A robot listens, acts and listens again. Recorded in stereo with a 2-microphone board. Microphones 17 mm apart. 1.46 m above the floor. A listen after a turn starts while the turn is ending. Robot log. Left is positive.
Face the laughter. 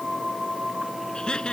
note: The laughter: about 60° left or 120° left.
cmd yaw +60
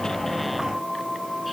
cmd idle
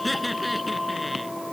end: Found it: laughter, straight ahead.